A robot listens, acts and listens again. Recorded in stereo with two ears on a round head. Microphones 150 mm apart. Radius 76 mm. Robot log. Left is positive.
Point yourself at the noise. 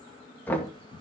cmd yaw +30
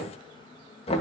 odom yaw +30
note: So it is at 140° left.
cmd yaw +140
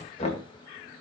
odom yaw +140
note: The knocking is now 40° left.
cmd yaw +40
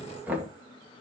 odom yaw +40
note: The knocking is now 10° right.
cmd yaw -10
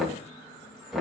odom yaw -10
end: Facing the knocking.